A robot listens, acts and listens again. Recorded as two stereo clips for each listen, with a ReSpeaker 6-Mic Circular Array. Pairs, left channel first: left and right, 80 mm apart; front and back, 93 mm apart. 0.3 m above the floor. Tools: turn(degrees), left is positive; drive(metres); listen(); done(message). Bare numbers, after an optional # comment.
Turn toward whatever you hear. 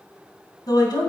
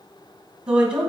# The woman speaking: 105° left.
turn(105)
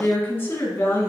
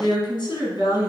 # The woman speaking is now 30° left.
turn(30)
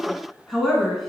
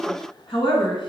done("Facing the woman speaking, 2 to 4 m away.")